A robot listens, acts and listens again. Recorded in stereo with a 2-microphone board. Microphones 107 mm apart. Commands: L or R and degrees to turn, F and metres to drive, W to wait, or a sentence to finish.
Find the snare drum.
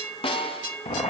L55
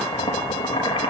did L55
W
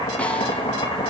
W
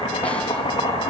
I heard a snare drum, but can't make it out now. It was about straight ahead or 70° left.